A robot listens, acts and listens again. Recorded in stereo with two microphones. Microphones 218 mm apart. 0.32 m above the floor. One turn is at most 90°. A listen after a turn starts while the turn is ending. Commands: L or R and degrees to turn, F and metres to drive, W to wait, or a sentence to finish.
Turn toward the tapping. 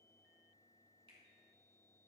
W
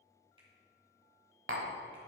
R65
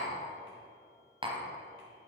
R30
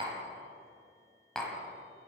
Found it: tapping, straight ahead.